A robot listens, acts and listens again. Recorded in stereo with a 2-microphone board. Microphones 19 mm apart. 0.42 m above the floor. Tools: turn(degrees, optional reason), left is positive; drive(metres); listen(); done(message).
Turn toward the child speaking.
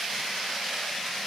listen()
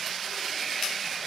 listen()
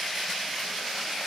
done("I can't make out a child speaking to turn to.")